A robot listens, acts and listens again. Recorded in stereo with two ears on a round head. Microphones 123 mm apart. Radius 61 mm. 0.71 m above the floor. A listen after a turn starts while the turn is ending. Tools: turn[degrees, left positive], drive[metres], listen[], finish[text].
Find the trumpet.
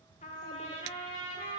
Thought: The trumpet: about 50° left or 130° left.
Action: turn[50]
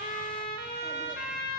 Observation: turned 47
Thought: So it is at 80° left.
Action: turn[80]
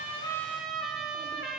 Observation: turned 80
Action: finish[Found it: a trumpet, straight ahead.]